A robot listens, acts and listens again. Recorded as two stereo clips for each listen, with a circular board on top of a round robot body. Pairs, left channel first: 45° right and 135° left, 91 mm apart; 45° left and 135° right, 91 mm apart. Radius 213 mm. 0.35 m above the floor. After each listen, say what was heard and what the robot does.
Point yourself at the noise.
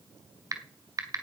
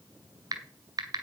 The typing on a keyboard: 175° right. Turn 175° right.
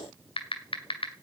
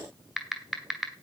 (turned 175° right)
The typing on a keyboard is now 50° right. Turn 50° right.
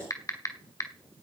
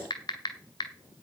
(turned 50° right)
Found it: typing on a keyboard, straight ahead.